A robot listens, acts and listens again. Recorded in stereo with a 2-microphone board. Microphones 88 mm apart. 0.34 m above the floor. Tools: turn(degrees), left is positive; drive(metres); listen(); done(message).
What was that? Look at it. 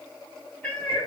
turn(degrees=20)
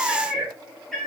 turn(degrees=30)
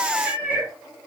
turn(degrees=-20)
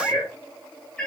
turn(degrees=10)
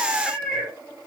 done("Found it: a cat meowing, straight ahead, 2 to 4 m away.")